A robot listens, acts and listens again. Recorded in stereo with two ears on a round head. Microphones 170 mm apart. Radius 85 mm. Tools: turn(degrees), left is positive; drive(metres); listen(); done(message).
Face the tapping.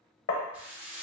turn(degrees=70)
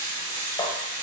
listen()
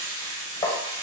turn(degrees=25)
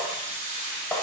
turn(degrees=10)
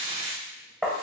done("Facing the tapping, under 1 m away.")